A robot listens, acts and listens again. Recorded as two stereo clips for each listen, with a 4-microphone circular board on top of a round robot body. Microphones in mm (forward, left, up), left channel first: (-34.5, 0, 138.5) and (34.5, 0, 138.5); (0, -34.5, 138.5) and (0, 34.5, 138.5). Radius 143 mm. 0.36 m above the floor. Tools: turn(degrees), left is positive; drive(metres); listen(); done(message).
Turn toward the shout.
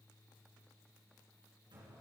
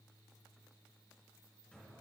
listen()
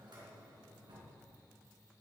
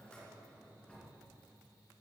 listen()
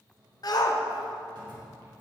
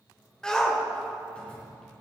turn(degrees=-170)
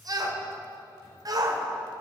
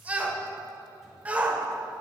turn(degrees=20)
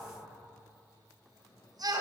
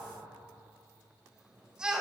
turn(degrees=10)
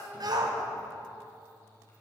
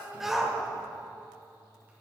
done("Facing the shout, 2 to 4 m away.")